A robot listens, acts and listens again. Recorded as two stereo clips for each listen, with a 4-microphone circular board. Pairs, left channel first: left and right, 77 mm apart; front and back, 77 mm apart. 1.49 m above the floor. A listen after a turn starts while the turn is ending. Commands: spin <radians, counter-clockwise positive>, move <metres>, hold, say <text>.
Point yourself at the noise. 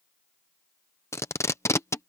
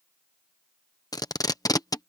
spin 0.61
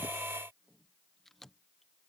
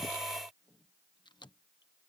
hold
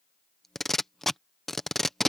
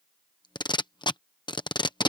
say Facing the tape being pulled.